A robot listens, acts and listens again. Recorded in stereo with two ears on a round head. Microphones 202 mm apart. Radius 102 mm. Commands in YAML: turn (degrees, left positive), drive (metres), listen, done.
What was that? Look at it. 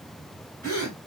turn: -45
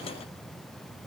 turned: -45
listen: true
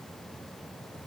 done: "I heard a gasp, but can't make it out now. It was about straight ahead or 90° right."